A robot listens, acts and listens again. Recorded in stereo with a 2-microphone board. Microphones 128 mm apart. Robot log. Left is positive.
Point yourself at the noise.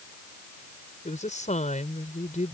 cmd yaw +90
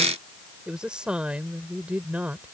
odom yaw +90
note: So it is at 15° right.
cmd yaw -15
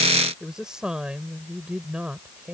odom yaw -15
note: The woman speaking is now 10° right.
cmd yaw -10
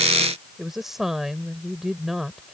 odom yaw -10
end: Facing the woman speaking.